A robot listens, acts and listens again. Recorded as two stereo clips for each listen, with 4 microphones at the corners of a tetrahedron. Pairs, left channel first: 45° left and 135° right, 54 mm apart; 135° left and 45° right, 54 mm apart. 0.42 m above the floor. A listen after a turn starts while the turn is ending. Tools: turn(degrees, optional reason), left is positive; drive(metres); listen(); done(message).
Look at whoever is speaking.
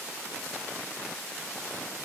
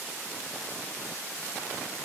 listen()
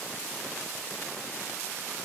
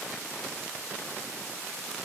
listen()
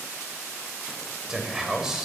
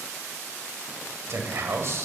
turn(degrees=-55, reason="The man speaking: 55° right.")
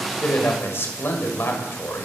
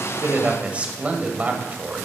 turn(degrees=15, reason="The man speaking is now 15° left.")
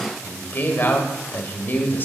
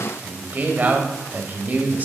done("Facing the man speaking.")